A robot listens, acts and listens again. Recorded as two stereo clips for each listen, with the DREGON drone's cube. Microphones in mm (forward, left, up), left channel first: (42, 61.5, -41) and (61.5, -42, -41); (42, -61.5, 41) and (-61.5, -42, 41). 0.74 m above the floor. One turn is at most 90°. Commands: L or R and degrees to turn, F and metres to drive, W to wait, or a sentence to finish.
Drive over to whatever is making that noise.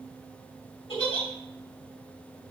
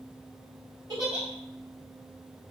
L90
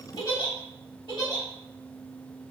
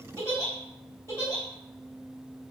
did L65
L55
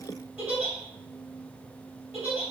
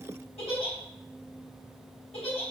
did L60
F1.0
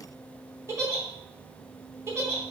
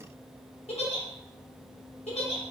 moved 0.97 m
R15
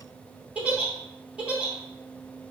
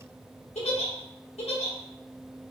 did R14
F1.0
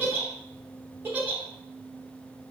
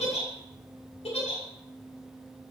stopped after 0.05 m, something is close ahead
I am next to the giggle.